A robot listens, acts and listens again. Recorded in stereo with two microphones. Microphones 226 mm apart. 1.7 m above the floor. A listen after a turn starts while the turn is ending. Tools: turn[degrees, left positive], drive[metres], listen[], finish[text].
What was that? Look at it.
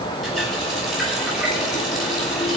Action: turn[30]
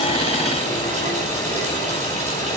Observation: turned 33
Thought: So it is at 30° right.
Action: turn[-30]
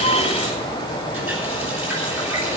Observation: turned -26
Action: finish[Found it: a running tap, straight ahead.]